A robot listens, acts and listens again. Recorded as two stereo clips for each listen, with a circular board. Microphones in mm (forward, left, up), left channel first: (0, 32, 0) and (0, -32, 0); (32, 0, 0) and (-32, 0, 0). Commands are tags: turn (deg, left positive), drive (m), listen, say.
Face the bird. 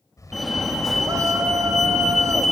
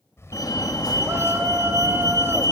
<turn deg="50"/>
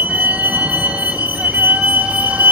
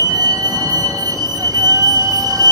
<listen/>
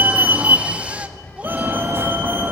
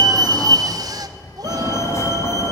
<turn deg="15"/>
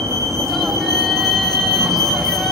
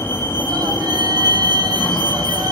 <listen/>
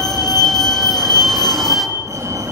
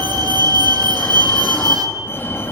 <listen/>
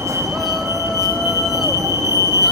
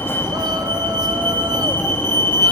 <say>Facing where the bird came from. I can't hear it now.</say>